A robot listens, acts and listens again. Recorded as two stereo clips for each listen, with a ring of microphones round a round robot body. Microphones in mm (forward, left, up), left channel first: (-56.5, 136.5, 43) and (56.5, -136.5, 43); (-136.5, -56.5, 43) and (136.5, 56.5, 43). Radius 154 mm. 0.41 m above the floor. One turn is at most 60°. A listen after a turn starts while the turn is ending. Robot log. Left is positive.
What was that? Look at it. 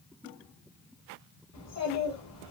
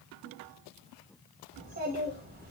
note: The child speaking: 80° left.
cmd yaw +60
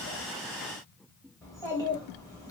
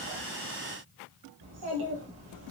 note: The child speaking is now 35° left.
cmd yaw +35
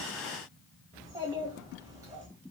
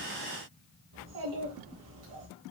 note: The child speaking is now 10° left.
cmd yaw +10
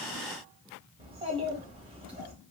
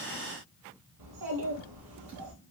end: Found it: a child speaking, straight ahead.